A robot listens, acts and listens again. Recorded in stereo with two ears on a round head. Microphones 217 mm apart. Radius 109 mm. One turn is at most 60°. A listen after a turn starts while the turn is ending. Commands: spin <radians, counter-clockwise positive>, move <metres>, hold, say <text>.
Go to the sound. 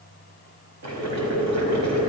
spin -1.05
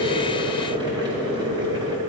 spin -0.35
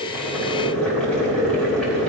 move 1.0
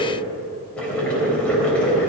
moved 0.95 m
move 1.0
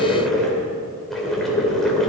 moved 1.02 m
move 1.0
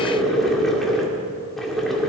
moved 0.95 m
move 1.0
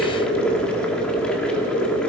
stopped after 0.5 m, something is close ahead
say Arrived at the boiling, straight ahead.